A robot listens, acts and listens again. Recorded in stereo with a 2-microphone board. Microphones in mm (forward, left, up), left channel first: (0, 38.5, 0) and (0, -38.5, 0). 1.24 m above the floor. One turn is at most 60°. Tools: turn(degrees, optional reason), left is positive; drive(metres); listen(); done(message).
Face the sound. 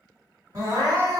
turn(degrees=-50, reason="The crying: about 50° right or 130° right.")
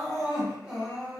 done("Facing the crying.")